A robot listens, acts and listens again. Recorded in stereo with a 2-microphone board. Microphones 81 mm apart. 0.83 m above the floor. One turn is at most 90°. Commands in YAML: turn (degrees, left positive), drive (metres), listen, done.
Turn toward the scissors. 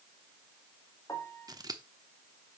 turn: -50
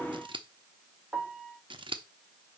turn: -80
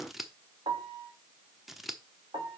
done: "Found it: scissors, straight ahead, under 1 m away."